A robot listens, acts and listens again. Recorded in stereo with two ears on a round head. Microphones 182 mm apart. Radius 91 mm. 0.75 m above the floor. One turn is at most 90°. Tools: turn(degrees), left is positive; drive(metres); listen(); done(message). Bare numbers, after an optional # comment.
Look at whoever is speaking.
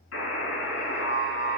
listen()
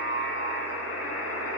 listen()
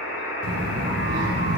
turn(-90)
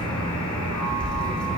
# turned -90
done("Facing the child speaking, 1 to 2 m away.")